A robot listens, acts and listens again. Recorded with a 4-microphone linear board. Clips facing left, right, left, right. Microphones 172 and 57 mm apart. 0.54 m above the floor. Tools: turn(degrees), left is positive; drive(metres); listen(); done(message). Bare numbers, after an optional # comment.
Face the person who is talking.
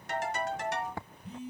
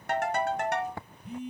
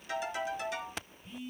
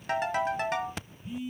listen()
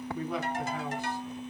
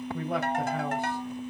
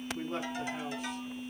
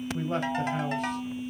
# The man speaking: about 60° right or 120° right.
turn(-60)
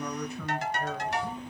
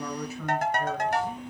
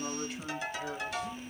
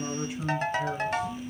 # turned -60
done("Found it: a man speaking, straight ahead, 2 to 4 m away.")